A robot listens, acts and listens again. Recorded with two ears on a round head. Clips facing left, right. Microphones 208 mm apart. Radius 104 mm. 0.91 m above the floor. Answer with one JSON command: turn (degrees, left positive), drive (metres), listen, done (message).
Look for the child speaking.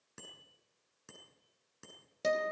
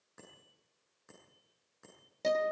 {"listen": true}
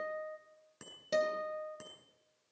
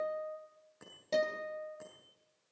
{"listen": true}
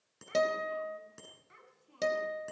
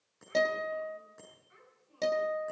{"turn": 90}
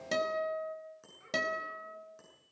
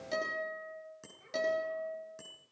{"turn": 15}
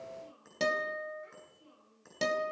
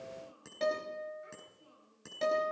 {"done": "Facing the child speaking."}